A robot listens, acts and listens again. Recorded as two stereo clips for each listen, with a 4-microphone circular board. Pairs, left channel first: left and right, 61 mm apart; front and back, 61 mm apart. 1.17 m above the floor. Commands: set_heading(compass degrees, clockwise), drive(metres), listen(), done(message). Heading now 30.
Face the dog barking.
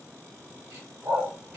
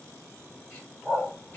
set_heading(115)
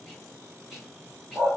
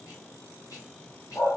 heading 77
set_heading(112)
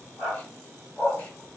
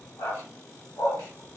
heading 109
done("Found it: a dog barking, straight ahead, 1 to 2 m away.")